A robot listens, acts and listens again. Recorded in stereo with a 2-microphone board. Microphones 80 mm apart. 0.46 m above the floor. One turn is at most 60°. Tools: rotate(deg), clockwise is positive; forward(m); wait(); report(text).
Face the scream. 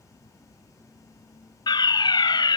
wait()
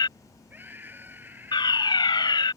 rotate(25)
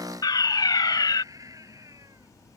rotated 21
rotate(60)
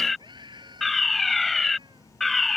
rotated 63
rotate(60)
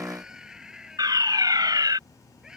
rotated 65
rotate(10)
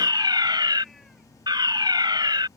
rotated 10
wait()
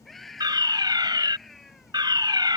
report("Facing the scream.")